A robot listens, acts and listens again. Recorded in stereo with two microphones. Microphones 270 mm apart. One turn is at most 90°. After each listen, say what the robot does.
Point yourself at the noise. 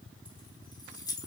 Turn 30° left.
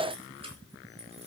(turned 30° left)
Turn 20° right.
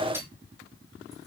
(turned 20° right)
Turn 10° right.
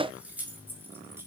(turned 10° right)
Turn 10° right.
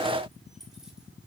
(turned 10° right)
Facing the keys jangling, over 4 m away.